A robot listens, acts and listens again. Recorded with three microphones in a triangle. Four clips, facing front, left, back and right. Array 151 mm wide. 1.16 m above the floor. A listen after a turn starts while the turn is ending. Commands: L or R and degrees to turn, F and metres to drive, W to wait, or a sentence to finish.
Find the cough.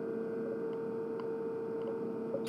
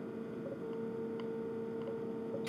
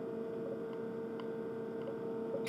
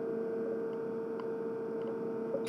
W
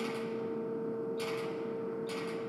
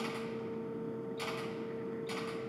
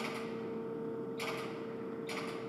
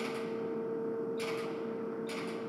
W
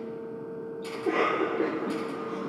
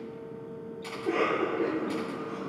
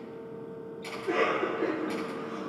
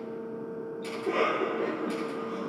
Found it: a cough, straight ahead.